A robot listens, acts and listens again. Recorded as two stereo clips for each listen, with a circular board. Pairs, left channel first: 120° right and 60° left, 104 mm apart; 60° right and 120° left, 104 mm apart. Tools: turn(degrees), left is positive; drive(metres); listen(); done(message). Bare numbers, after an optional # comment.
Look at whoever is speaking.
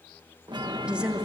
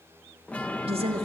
# The woman speaking: 140° left.
turn(140)
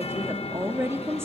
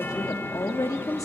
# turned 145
done("Facing the woman speaking.")